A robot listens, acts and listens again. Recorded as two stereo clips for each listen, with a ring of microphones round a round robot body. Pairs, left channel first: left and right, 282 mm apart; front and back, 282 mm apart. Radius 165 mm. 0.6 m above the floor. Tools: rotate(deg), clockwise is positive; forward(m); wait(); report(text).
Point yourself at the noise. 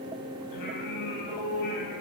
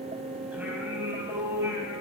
rotate(-100)
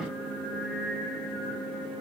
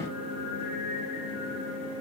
report("Facing the singing.")